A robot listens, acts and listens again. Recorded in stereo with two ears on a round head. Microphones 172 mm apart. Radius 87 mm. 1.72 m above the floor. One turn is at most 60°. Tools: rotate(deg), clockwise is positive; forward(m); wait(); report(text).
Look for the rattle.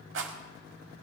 rotate(60)
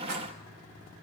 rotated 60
wait()
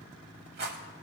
rotate(50)
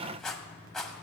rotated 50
report("Facing the rattle.")